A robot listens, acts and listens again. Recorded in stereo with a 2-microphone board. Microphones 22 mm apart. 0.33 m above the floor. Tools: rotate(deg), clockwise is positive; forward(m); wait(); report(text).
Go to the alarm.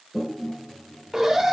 rotate(20)
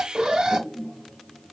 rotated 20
rotate(135)
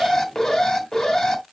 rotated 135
rotate(-25)
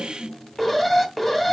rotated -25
forward(1.0)
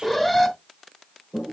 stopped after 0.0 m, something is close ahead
rotate(-10)
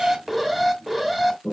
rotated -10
report("Something is in my way. I am facing the alarm but have not reached it.")